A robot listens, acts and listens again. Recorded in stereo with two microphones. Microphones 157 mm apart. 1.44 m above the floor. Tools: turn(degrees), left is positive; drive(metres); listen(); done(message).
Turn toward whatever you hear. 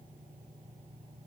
listen()
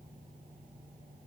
listen()
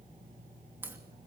turn(degrees=-30)
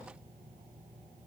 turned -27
listen()
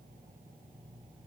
done("I heard a crack, but can't make it out now. It was about 15° left or 140° right.")